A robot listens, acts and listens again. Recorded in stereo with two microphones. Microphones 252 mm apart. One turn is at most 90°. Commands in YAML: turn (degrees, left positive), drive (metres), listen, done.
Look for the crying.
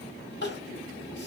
turn: 45
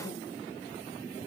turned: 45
listen: true
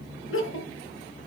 turn: 80
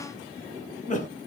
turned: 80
turn: 35
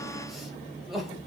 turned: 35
done: "Facing the crying."